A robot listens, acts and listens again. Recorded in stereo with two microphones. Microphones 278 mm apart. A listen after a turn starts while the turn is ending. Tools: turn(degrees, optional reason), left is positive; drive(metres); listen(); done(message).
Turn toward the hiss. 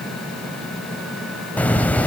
turn(degrees=30)
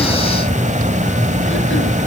turn(degrees=-25, reason="So it is at 25° right.")
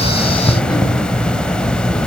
done("Found it: a hiss, straight ahead.")